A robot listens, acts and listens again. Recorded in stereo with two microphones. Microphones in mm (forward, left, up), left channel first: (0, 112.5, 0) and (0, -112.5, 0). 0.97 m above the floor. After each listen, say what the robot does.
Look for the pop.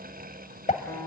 Turn 30° left.
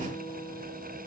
Keep listening.
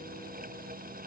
I heard a pop, but can't make it out now. It was about straight ahead or 120° left.